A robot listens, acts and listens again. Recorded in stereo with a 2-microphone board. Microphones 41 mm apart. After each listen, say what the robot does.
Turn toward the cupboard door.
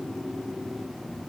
Keep listening.
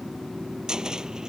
Turn 15° right.
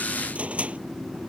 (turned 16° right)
Turn 145° right.
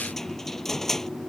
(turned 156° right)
Turn 10° left.
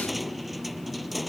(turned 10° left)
Facing the cupboard door.